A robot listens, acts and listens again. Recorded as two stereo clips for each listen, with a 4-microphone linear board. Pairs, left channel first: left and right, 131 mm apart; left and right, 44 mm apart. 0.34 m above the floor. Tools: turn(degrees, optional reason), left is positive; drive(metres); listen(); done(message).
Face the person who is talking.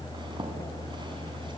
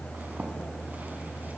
listen()
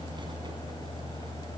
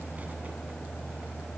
listen()
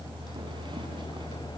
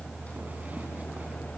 done("I can't make out anyone speaking to turn to.")